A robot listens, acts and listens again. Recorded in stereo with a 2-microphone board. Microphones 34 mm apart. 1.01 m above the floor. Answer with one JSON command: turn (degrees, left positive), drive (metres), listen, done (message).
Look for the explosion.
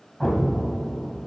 {"turn": 30}
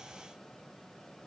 {"listen": true}
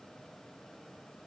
{"done": "I heard an explosion, but can't make it out now. It was about 25° right or 145° left."}